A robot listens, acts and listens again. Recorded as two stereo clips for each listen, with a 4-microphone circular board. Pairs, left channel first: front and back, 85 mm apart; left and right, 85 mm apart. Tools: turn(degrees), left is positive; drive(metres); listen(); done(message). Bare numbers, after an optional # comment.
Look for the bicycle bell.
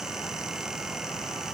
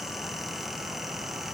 listen()
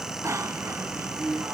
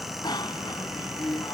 # The bicycle bell: 125° left.
turn(125)
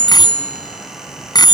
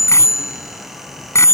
# The bicycle bell is now 35° left.
turn(35)
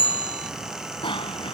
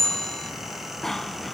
done("Found it: a bicycle bell, straight ahead.")